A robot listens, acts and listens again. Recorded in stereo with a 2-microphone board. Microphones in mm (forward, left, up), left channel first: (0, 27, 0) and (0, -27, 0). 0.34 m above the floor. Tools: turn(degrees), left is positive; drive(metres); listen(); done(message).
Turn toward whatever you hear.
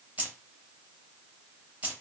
turn(degrees=-30)
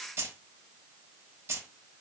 turn(degrees=-110)
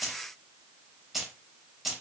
done("Found it: keys jangling, straight ahead.")